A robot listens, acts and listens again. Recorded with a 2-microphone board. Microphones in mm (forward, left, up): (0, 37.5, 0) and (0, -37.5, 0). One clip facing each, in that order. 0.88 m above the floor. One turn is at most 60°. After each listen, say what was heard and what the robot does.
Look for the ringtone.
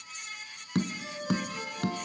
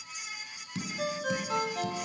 Turn 60° right.
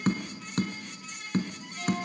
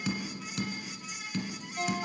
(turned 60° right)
So it is at 40° right. Turn 40° right.
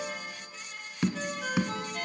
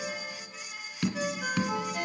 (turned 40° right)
The ringtone is now 10° right. Turn 10° right.
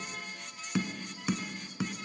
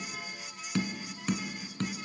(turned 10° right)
Keep listening.
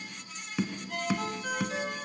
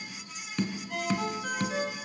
Facing the ringtone.